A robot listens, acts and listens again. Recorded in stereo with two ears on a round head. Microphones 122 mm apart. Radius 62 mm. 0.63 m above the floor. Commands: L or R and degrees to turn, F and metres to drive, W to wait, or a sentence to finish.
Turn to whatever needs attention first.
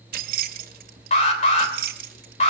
L50
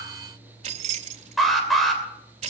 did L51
Found it: an alarm, straight ahead, 2 to 4 m away.